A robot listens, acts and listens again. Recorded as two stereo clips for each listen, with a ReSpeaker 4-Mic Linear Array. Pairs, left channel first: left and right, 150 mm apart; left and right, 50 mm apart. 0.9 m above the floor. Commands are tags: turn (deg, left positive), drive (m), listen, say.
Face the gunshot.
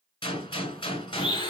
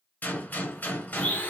<turn deg="35"/>
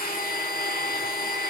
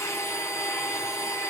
<listen/>
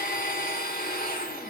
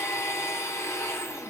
<say>I heard a gunshot, but can't make it out now. It was about straight ahead or 110° left.</say>